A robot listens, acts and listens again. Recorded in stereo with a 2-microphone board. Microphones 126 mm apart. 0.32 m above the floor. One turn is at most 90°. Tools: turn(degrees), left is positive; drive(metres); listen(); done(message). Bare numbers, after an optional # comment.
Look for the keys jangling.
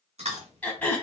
listen()
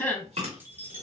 # The keys jangling: about 15° right or 165° right.
turn(-15)
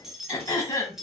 done("Facing the keys jangling.")